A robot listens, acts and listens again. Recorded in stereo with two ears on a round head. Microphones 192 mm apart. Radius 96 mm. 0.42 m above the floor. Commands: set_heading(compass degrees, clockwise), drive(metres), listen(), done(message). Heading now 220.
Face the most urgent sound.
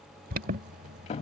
set_heading(265)
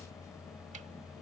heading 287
set_heading(267)
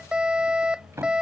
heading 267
done("Found it: an alarm, straight ahead.")